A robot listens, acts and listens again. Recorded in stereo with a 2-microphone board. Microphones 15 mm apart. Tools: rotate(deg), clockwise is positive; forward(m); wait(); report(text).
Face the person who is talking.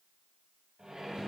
wait()
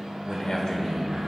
rotate(-45)
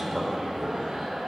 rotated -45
rotate(-15)
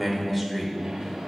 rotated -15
report("Facing the man speaking.")